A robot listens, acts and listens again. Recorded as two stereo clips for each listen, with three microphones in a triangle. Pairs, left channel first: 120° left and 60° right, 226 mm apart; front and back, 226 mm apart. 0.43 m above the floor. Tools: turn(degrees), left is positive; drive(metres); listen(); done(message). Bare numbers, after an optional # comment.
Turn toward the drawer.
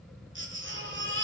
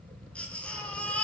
listen()
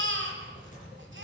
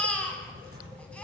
listen()
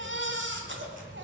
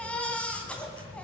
done("I can't make out a drawer, only a baby crying.")